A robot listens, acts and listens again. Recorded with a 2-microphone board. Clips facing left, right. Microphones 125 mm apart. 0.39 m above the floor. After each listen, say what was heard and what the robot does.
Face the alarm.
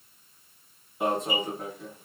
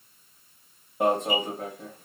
The alarm: about 55° right or 125° right. Turn 55° right.
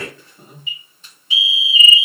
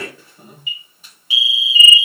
So it is at 10° right. Turn 10° right.
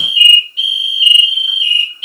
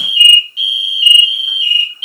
Found it: an alarm, straight ahead.